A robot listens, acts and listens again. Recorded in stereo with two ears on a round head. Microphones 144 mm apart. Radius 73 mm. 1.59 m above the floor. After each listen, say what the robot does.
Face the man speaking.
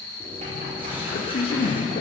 Turn 45° left.
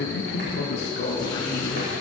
Turn 100° left.
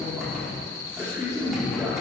Turn 20° right.
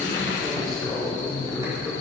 Facing the man speaking, 2 to 4 m away.